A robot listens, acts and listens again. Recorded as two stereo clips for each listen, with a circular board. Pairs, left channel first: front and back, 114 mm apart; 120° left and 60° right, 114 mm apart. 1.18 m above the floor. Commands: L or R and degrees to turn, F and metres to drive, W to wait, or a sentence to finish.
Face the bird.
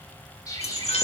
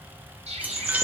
R55
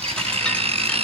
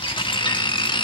W
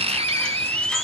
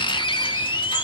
W
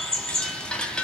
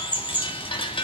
L15
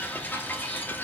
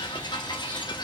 W
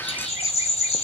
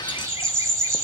Facing the bird, over 4 m away.